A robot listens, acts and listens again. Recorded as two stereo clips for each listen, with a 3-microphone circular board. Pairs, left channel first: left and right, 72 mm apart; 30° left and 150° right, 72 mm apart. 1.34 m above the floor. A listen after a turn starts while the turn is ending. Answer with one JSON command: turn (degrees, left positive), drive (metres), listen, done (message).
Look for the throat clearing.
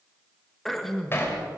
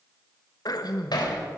{"done": "Facing the throat clearing."}